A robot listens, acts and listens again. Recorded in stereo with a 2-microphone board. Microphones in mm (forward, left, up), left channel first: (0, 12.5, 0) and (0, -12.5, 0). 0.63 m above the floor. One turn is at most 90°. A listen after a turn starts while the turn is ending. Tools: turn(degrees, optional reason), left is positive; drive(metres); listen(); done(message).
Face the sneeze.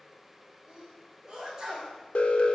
turn(degrees=-15, reason="The sneeze: about 15° right or 165° right.")
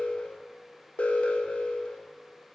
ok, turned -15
listen()
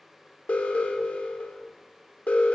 done("I heard a sneeze, but can't make it out now. It was about straight ahead or 150° right.")